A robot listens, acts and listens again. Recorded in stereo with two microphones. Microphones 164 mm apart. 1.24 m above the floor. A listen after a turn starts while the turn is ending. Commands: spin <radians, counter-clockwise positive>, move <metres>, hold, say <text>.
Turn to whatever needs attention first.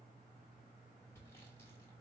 hold
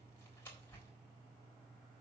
hold
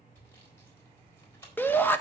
spin 0.52
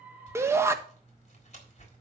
spin -0.26
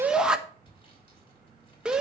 say Facing the shout, 1 to 2 m away.